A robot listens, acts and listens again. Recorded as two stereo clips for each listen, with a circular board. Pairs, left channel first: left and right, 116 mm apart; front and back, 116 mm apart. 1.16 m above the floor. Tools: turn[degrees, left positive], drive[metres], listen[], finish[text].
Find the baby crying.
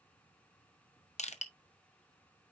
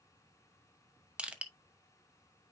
Action: listen[]
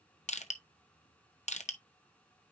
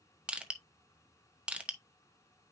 Action: listen[]
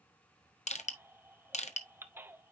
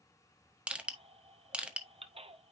Thought: The baby crying: 160° right.
Action: turn[-160]
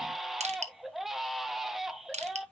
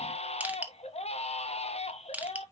Action: finish[Found it: a baby crying, straight ahead.]